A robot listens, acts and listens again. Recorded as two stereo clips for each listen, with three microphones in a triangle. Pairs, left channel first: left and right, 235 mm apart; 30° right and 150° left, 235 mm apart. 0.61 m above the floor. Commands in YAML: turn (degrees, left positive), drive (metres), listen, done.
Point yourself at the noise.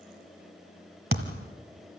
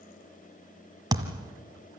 turn: -135
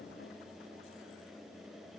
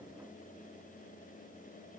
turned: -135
done: "I heard a thud from this way, but can't make it out now."